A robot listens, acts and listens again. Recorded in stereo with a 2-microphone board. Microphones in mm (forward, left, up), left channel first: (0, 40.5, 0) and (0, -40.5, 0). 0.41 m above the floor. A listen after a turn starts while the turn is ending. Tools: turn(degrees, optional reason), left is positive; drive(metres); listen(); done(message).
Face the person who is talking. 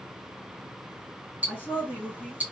turn(degrees=25, reason="The woman speaking: about 25° left or 155° left.")
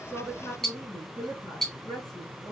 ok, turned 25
turn(degrees=130, reason="So it is at 130° left.")
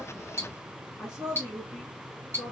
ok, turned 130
turn(degrees=-15, reason="The woman speaking is now 15° right.")
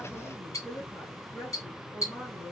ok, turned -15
done("Found it: a woman speaking, straight ahead.")